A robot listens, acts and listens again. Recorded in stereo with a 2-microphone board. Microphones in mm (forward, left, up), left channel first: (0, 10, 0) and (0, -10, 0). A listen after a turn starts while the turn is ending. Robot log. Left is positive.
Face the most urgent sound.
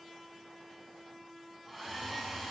cmd idle
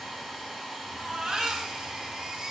note: The baby crying: about 45° right or 135° right.
cmd yaw -45
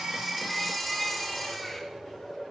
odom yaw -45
end: Facing the baby crying.